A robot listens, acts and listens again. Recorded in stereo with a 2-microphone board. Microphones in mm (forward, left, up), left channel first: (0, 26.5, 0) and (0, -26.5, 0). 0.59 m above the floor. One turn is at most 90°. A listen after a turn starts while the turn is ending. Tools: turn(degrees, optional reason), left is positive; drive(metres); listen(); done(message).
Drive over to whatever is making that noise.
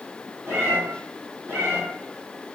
turn(degrees=-60, reason="The cat meowing: about 60° right or 120° right.")
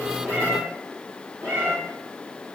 turn(degrees=-60, reason="So it is at 60° right.")
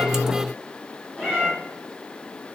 turn(degrees=20, reason="The cat meowing is now 20° left.")
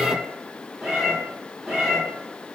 drive(metres=1.0)
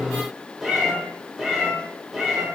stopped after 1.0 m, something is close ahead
done("I am next to the cat meowing.")